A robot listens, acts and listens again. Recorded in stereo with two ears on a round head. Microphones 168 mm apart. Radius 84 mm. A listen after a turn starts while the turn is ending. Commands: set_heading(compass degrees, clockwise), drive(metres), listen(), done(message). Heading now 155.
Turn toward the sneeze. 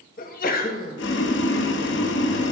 set_heading(105)
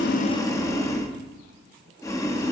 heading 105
listen()
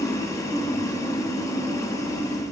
done("I heard a sneeze, but can't make it out now. It was about straight ahead or 80° left.")